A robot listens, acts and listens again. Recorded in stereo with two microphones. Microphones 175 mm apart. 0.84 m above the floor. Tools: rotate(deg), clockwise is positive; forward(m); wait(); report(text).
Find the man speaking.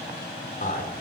rotate(-55)
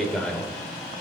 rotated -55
report("Facing the man speaking.")